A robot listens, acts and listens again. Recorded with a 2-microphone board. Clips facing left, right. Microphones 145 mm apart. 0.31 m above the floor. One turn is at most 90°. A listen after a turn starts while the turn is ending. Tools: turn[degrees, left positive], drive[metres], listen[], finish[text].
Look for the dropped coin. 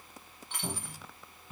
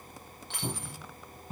Action: turn[-90]
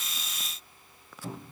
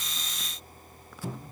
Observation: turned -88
Action: finish[I heard a dropped coin from this way, but can't make it out now.]